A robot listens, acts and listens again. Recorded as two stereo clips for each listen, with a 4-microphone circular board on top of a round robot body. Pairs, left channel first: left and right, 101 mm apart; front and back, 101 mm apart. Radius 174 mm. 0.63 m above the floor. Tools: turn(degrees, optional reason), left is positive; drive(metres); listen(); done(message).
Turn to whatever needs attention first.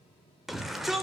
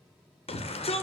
done("Facing the shout.")